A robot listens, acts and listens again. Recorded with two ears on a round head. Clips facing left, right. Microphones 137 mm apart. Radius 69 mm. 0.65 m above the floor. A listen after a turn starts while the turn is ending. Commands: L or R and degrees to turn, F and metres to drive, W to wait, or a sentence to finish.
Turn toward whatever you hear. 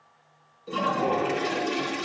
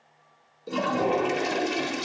R45
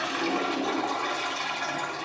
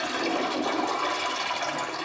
R80
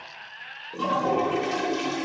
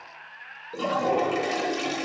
R15
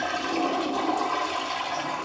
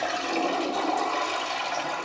Found it: a toilet flushing, straight ahead.